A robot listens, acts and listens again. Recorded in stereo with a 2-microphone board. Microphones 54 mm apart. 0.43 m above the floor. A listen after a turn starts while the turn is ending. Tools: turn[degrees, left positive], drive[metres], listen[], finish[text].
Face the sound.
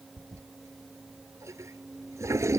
Thought: The toilet flushing: about 60° right or 120° right.
Action: turn[-60]
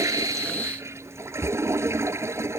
Thought: So it is at 55° right.
Action: turn[-55]
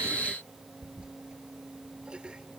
Thought: The toilet flushing is now 20° right.
Action: turn[-20]
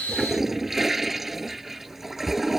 Action: finish[Facing the toilet flushing.]